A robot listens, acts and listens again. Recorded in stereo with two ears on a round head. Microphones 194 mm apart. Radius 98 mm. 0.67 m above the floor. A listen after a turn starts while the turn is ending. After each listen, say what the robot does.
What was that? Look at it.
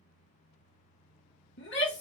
Turn 55° left.
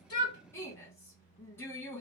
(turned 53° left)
Turn 15° left.
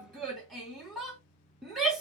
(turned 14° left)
Found it: a shout, straight ahead, 1 to 2 m away.